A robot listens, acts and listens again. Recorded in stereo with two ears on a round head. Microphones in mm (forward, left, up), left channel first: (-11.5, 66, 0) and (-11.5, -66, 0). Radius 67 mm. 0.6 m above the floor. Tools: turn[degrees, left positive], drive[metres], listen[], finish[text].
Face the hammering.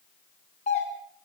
Action: listen[]
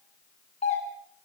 Action: listen[]
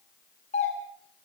Action: finish[I can't make out hammering, only a doorbell.]